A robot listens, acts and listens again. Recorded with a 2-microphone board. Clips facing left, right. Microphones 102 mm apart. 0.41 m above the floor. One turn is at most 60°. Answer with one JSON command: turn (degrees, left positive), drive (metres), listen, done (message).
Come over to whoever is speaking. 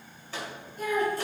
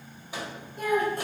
{"turn": -60}
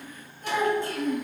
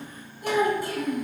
{"turn": -10}
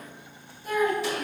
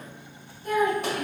{"drive": 1.0}
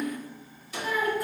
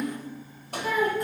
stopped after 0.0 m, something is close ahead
{"done": "Something is in my way. I am facing the child speaking but have not reached it."}